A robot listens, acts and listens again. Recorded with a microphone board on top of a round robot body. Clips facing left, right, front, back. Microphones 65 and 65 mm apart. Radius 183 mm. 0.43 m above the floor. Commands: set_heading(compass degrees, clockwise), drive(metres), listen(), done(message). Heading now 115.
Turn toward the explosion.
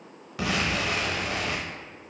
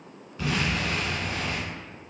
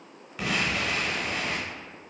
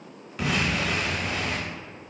set_heading(30)
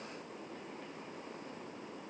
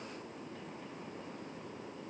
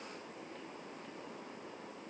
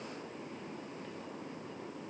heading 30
done("I heard an explosion from this way, but can't make it out now.")